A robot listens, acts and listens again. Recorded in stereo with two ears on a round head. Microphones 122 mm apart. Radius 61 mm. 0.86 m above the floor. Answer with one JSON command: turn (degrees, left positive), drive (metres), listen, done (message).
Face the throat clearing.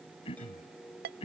{"turn": 45}
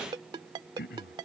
{"turn": 90}
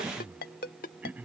{"turn": -15}
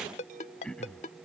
{"done": "Facing the throat clearing."}